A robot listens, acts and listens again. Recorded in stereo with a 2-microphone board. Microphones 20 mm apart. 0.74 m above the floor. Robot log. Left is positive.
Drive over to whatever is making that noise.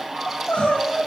note: The crying: about 70° left or 110° left.
cmd yaw +70
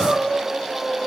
note: So it is at 40° left.
cmd yaw +40
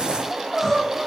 note: The crying is now 10° left.
cmd yaw +10
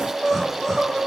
cmd fwd 1.0
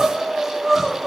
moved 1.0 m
cmd fwd 1.0
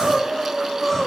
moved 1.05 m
note: The crying is now 15° left.
cmd yaw +15
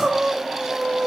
cmd fwd 1.0
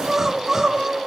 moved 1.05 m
note: The crying is now 20° right.
cmd yaw -20
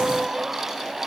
cmd fwd 1.0
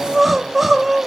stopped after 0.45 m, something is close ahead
end: Arrived at the crying, straight ahead.